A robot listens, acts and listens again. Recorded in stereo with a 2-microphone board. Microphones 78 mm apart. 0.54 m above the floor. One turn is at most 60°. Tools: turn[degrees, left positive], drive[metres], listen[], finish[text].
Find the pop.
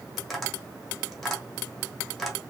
Action: listen[]
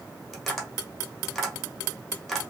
Action: listen[]
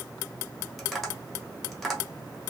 Action: finish[I can't make out a pop to turn to.]